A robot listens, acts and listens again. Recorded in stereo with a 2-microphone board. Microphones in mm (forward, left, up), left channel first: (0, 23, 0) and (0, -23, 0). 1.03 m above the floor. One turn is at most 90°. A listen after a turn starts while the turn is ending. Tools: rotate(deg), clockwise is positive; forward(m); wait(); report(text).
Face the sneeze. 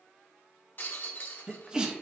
rotate(15)
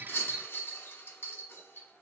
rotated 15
wait()
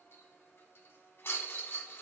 report("I heard a sneeze, but can't make it out now. It was about straight ahead or 150° right.")